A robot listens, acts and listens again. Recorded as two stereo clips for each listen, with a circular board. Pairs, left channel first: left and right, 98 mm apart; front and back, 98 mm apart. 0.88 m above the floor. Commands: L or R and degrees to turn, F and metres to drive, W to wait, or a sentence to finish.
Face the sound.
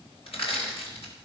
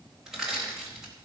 L95
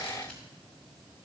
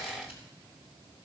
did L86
L10
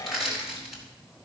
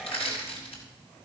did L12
Facing the crushing, over 4 m away.